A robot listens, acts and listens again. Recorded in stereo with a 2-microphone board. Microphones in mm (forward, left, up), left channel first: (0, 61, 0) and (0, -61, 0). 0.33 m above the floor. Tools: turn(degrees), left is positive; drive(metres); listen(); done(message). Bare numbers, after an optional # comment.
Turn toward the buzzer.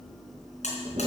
# The buzzer: about 70° left or 110° left.
turn(70)
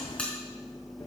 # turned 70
# So it is at 10° left.
turn(10)
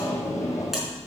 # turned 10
listen()
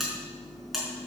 done("Found it: a buzzer, straight ahead.")